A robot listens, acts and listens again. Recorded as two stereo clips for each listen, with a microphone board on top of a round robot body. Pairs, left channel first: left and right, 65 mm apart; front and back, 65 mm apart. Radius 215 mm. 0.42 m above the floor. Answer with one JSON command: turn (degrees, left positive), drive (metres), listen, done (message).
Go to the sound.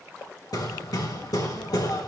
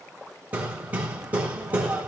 {"turn": 110}
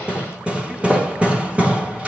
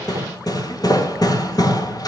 {"turn": -20}
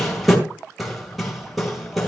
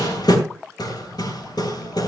{"drive": 1.0}
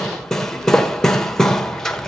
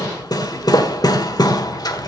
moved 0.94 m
{"drive": 1.0}
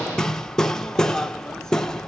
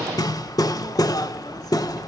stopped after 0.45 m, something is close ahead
{"turn": 10}
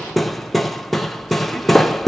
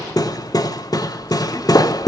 {"done": "I am next to the hammering."}